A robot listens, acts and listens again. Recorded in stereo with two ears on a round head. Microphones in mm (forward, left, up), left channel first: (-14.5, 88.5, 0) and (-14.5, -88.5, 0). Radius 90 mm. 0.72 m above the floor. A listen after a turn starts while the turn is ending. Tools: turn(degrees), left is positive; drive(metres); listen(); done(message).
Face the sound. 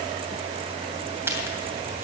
turn(degrees=-30)
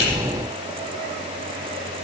listen()
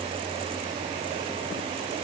done("I heard a crack, but can't make it out now. It was about 15° left or 135° right.")